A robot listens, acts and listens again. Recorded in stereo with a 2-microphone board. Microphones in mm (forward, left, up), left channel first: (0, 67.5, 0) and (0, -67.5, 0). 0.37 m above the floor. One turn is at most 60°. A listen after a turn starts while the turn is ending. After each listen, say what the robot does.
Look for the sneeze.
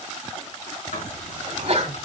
Turn 55° right.
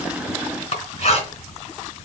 Keep listening.
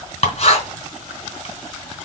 I heard a sneeze, but can't make it out now. It was about straight ahead or 70° right.